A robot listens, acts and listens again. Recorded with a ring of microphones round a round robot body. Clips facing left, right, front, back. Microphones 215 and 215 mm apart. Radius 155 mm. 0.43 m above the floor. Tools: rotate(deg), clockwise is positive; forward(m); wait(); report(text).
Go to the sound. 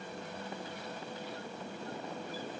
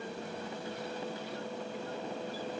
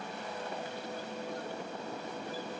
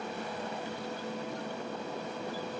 wait()
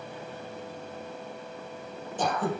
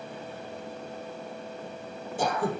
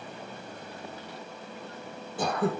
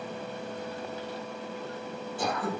rotate(10)
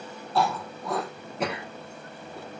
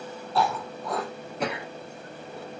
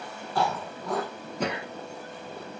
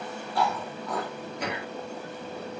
forward(1.0)
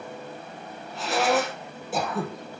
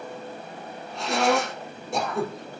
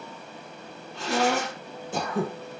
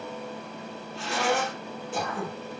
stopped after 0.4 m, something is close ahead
report("Blocked. The throat clearing is further on, straight ahead.")